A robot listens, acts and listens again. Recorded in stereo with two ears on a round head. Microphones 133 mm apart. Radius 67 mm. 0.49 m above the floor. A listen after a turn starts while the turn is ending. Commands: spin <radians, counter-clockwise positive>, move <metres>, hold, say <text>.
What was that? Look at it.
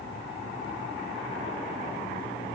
hold
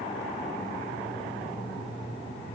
hold
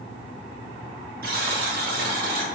spin -1.13
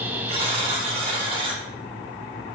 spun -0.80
spin -0.70
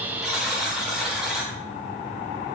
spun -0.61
say Found it: a buzzer, straight ahead, under 1 m away.